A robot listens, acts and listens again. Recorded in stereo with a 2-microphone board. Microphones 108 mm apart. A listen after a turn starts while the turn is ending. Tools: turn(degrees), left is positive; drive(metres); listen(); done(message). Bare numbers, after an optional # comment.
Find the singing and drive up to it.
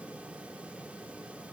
listen()
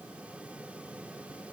listen()
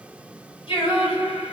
# The singing: about 60° left or 120° left.
turn(60)
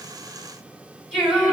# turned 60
drive(1.0)
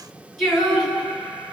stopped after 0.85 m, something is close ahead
done("I am next to the singing.")